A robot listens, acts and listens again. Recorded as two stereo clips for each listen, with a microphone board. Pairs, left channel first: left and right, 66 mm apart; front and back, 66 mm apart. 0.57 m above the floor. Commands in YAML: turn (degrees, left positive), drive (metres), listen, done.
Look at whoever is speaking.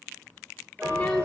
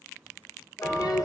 turn: 15
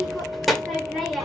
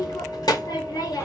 done: "Found it: a child speaking, straight ahead."